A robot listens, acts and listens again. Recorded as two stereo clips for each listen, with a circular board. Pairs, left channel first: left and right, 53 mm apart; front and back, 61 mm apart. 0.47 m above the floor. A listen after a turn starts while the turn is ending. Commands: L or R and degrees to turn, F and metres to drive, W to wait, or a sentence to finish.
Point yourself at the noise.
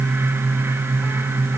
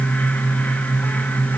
W
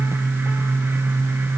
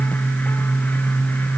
W
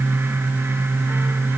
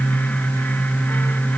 I can't make out anything to turn to.